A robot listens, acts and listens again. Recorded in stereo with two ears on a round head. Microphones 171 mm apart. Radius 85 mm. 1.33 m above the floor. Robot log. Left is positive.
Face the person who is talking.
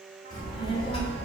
note: The child speaking: about 35° left or 145° left.
cmd yaw +35
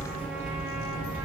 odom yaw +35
note: So it is at 105° left.
cmd yaw +105
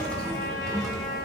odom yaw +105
end: Facing the child speaking.